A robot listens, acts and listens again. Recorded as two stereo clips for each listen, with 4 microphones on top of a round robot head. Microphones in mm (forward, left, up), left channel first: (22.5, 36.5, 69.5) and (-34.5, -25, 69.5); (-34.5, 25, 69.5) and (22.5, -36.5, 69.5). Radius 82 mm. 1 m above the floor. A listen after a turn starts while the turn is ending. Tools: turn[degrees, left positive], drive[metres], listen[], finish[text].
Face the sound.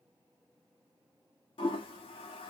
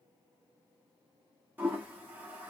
Thought: The toilet flushing: 25° left.
Action: turn[25]
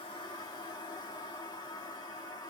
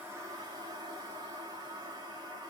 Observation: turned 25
Action: finish[Found it: a toilet flushing, straight ahead.]